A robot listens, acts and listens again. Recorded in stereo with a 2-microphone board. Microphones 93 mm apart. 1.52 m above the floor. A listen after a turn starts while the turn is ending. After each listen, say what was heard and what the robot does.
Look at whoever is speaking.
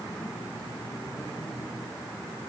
Keep listening.
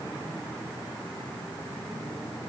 Keep listening.
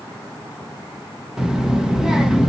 Turn 30° right.
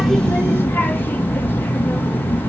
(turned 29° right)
So it is at 20° left. Turn 20° left.
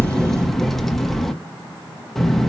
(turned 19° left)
Found it: a child speaking, straight ahead, 1 to 2 m away.